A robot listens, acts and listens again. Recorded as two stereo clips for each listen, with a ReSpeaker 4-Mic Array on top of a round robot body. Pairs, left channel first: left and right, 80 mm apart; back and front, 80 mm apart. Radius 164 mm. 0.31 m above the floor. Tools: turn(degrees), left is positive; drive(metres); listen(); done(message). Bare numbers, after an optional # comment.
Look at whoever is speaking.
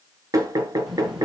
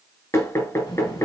# The child speaking: straight behind.
turn(180)
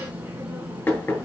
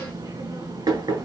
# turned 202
# The child speaking is now 20° right.
turn(-20)
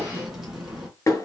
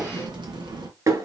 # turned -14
done("Facing the child speaking.")